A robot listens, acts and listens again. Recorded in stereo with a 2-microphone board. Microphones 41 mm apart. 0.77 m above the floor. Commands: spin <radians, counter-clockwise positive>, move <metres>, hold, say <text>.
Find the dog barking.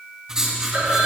hold
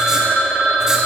hold
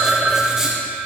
say I can't make out a dog barking to turn to.